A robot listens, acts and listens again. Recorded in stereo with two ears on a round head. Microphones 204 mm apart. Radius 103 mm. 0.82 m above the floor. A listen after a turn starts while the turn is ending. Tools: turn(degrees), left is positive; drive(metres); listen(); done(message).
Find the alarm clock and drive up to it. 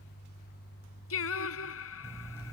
turn(degrees=30)
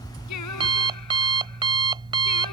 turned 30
turn(degrees=-20)
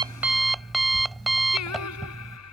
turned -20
drive(metres=1.0)
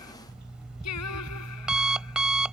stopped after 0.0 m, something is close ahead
done("Something is in my way. I am facing the alarm clock but have not reached it.")